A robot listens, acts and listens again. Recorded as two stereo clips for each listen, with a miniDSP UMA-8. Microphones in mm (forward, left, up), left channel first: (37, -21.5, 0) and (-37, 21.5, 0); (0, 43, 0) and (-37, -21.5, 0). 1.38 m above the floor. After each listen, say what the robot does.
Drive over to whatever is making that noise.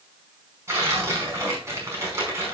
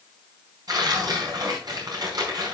Turn 150° right.
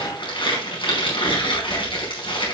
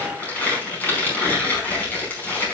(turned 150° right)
Drive 1.0 m forward.
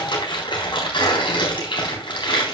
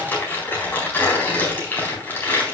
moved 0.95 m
Drive 1.0 m forward.
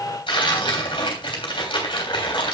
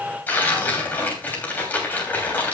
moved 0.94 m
Drive 1.0 m forward.
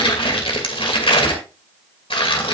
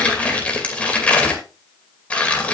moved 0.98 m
Turn 15° right.
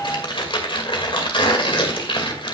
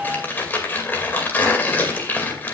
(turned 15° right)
Drive 1.0 m forward.
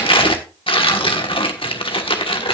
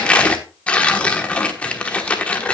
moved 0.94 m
Turn 15° right.
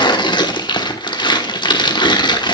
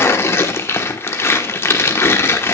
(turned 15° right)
Drive 1.0 m forward.
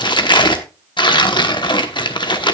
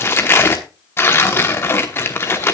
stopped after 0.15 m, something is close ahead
I am next to the tearing paper.